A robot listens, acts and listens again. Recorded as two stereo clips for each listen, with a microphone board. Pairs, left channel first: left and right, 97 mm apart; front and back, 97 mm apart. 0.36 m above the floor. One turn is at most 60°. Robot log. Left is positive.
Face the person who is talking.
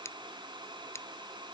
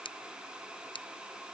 cmd idle
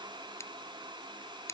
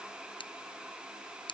cmd idle
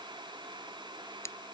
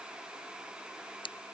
end: I can't make out anyone speaking, only scissors.